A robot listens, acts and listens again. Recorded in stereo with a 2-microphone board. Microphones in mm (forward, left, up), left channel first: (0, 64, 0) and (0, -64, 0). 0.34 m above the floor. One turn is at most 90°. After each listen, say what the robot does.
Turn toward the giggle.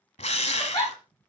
Turn 30° left.
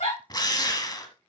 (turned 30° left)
Turn 90° left.
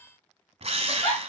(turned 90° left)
Turn 25° left.
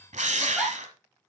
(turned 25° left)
Facing the giggle, over 4 m away.